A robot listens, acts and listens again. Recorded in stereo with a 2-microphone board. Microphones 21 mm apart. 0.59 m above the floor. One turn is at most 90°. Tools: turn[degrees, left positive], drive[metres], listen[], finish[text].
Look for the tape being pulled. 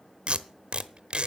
Thought: The tape being pulled: about 50° right or 130° right.
Action: turn[-50]
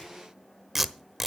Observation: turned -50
Action: finish[Found it: tape being pulled, straight ahead.]